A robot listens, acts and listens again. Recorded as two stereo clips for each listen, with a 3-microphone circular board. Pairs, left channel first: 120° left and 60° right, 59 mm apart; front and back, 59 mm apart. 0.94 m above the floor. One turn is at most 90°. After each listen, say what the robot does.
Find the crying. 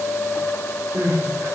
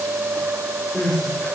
Turn 75° right.
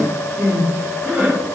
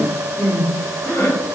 Found it: crying, straight ahead.